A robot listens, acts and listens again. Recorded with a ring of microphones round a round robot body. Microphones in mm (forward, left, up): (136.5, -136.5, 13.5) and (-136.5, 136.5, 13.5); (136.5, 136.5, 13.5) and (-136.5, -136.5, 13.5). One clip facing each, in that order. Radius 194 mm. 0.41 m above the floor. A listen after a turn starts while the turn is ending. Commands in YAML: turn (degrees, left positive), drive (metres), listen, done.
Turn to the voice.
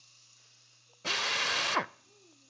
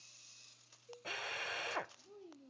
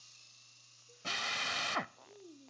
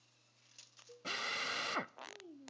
turn: 160
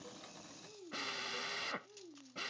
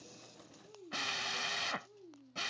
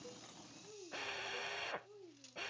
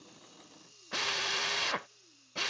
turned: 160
turn: 45
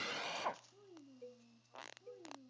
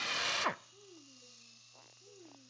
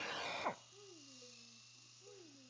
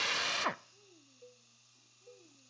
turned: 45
turn: 10
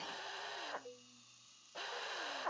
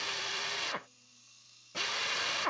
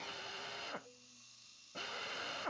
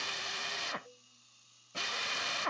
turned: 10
listen: true
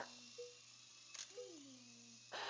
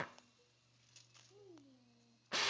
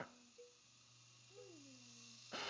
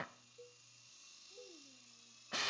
listen: true
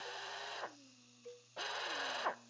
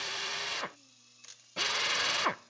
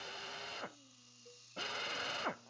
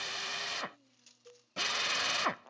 done: "I heard a child speaking from this way, but can't make it out now."